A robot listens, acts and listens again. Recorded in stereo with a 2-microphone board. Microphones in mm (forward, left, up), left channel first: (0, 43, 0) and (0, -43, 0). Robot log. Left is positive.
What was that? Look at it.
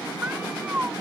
note: The cat meowing: about 20° right or 160° right.
cmd yaw -20
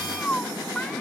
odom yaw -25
note: So it is at 10° left.
cmd yaw +10
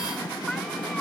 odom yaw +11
end: Facing the cat meowing.